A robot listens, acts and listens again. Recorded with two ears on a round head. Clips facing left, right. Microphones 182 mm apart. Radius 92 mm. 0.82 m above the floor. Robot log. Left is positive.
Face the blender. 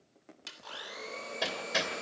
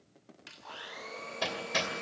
note: The blender: about 35° left or 145° left.
cmd yaw +35
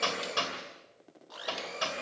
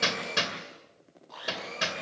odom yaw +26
note: So it is at 10° left.
cmd yaw +10
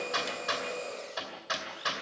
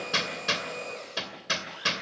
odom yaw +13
end: Found it: a blender, straight ahead.